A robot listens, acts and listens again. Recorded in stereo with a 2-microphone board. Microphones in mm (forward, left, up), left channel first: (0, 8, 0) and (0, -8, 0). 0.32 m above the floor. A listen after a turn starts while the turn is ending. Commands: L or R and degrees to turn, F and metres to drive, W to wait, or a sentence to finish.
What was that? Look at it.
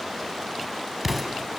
R30
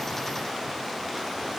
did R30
W
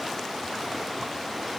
I heard an explosion, but can't make it out now. It was about 20° left or 140° right.